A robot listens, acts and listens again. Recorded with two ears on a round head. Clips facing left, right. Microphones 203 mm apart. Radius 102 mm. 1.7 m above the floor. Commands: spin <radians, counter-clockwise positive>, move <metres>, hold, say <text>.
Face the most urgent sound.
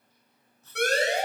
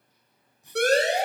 spin -0.52
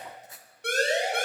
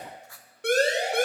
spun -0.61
spin -2.01
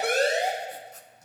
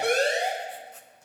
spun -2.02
say Found it: a siren, straight ahead, 2 to 4 m away.